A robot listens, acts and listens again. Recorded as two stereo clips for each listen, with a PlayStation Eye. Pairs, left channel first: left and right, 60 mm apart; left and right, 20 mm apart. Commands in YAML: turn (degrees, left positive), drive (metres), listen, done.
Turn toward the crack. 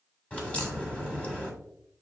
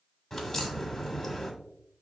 turn: 25
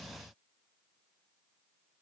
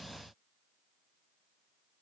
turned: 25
listen: true
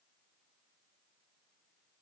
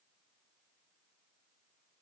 done: "I heard a crack, but can't make it out now. It was about straight ahead or 130° left."